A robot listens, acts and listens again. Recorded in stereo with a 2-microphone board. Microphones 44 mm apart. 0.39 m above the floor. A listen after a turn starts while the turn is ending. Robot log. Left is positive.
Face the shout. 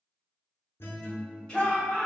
note: The shout: about 20° left or 160° left.
cmd yaw +20
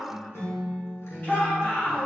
note: So it is at 140° left.
cmd yaw +140
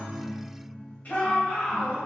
note: The shout is now 50° left.
cmd yaw +50
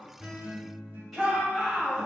end: Facing the shout.